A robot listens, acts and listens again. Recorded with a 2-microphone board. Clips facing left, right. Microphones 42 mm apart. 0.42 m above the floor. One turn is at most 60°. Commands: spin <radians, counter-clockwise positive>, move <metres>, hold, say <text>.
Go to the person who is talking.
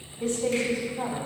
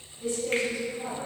spin 1.05
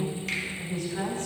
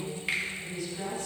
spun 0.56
spin 1.05
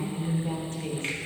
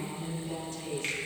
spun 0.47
spin 0.87
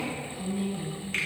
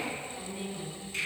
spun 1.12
spin -0.26
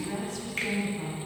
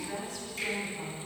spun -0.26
move 1.0
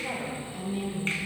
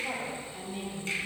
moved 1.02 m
move 1.0
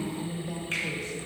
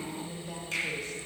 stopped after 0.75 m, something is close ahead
say I am next to the woman speaking.